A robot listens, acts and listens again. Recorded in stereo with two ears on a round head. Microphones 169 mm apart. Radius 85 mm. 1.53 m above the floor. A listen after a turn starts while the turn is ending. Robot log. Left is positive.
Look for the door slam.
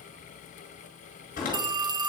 note: The door slam: about 45° left or 135° left.
cmd yaw +45
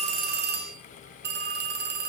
cmd idle
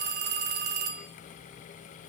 end: I heard a door slam, but can't make it out now. It was about straight ahead or 90° left.